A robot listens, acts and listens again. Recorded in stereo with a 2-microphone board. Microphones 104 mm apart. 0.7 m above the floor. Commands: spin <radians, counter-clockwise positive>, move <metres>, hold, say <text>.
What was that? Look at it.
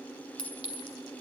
spin 0.87
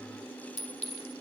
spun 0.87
spin 1.31
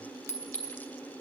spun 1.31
spin 0.44
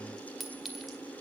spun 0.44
say Found it: a clink, straight ahead, 1 to 2 m away.